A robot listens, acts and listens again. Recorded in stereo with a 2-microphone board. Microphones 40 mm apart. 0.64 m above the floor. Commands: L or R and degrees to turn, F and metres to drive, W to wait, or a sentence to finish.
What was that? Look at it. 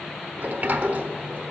R50
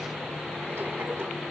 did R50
W
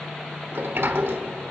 R80
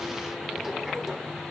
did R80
R10
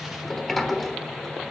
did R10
Found it: a sliding door, straight ahead.